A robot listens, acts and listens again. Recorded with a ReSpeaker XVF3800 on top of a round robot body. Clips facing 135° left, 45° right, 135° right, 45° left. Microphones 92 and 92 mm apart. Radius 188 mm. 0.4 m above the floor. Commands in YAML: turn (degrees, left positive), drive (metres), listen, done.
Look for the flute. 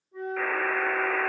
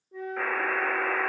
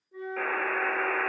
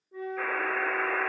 turn: -25
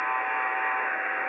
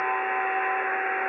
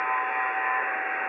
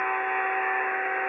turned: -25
listen: true
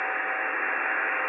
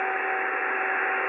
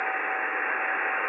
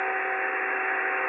listen: true
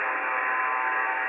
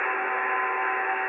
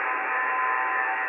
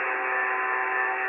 done: "Facing where the flute came from. I can't hear it now."